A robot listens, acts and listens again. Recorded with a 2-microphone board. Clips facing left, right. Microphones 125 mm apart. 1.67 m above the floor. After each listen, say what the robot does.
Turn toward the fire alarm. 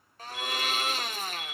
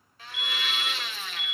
Turn 30° right.
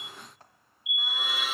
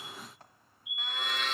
Turn 140° right.
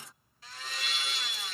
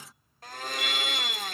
Turn 10° right.
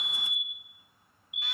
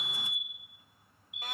Facing the fire alarm, 2 to 4 m away.